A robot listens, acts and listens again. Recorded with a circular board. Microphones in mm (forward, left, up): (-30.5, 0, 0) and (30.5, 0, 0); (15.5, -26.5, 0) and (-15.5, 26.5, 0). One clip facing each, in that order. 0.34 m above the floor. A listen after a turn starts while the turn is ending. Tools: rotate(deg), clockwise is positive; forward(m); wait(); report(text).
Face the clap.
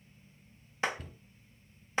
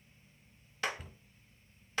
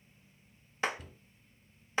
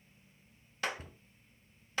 rotate(120)
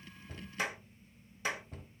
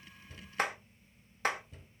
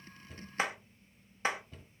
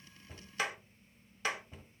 report("Facing the clap, 1 to 2 m away.")